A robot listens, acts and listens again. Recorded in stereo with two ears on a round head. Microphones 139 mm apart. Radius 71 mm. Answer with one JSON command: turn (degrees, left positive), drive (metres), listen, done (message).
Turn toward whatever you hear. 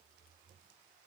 {"listen": true}
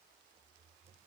{"listen": true}
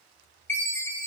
{"turn": 30}
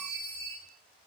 {"turn": -15}
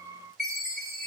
{"done": "Facing the chime."}